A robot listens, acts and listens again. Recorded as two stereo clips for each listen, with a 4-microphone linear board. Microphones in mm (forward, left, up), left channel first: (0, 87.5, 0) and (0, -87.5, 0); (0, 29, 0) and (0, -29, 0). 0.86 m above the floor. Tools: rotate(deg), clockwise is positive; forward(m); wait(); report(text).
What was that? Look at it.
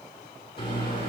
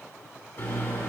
rotate(-30)
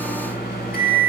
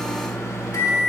rotate(-125)
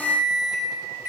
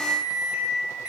rotate(15)
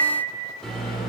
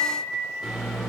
report("Found it: a microwave, straight ahead.")